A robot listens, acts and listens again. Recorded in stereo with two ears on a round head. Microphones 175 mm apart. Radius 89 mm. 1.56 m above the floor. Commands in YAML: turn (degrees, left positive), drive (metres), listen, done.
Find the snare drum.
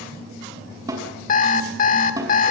turn: -15
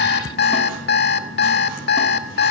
listen: true
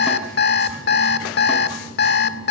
listen: true
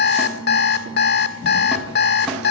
done: "I heard a snare drum, but can't make it out now. It was about straight ahead or 150° right."